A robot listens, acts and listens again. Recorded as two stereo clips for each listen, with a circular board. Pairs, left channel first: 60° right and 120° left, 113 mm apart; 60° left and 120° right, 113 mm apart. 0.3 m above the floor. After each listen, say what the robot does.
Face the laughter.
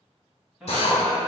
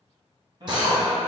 Turn 160° right.
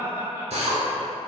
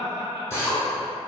Turn 55° left.
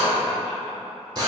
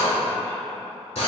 Keep listening.
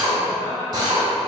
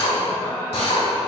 Keep listening.
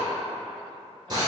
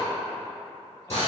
I heard laughter from this way, but can't make it out now.